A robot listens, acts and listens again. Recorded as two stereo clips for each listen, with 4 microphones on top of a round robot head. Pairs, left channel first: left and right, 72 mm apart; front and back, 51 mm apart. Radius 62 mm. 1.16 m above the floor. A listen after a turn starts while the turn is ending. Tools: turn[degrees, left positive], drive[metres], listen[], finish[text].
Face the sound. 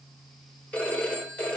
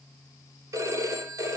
Thought: The phone ringing: 165° left.
Action: turn[165]
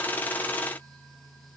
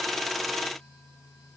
Action: listen[]
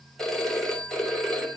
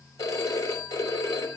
Action: finish[Found it: a phone ringing, straight ahead.]